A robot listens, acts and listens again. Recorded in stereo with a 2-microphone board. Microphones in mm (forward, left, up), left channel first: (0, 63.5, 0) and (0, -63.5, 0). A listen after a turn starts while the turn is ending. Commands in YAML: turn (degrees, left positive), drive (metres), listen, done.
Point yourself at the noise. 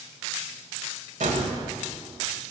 turn: -90
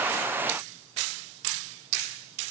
done: "Facing where the gunshot came from. I can't hear it now."